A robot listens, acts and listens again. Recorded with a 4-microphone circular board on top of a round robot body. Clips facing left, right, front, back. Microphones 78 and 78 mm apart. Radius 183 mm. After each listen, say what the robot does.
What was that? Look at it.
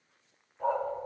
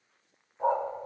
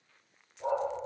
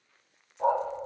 Turn 160° right.
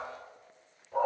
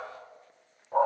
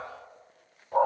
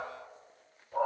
Turn 40° right.
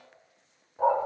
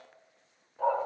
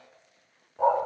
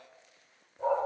Turn 20° left.
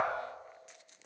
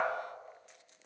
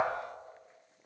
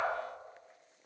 Facing the dog barking.